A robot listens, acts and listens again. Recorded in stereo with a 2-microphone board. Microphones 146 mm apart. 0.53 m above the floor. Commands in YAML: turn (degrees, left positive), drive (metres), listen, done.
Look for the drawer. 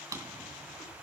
turn: -25
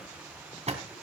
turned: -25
turn: -130
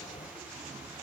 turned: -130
turn: -55
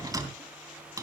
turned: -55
turn: -25
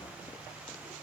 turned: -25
listen: true
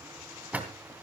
turn: -10
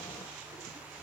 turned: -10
listen: true
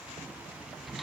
done: "Facing the drawer."